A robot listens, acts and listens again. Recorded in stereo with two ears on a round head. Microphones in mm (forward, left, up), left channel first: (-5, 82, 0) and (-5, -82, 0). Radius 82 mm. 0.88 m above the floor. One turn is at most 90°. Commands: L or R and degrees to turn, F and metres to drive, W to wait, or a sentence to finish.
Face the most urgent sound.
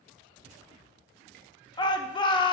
L25
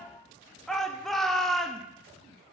Facing the shout.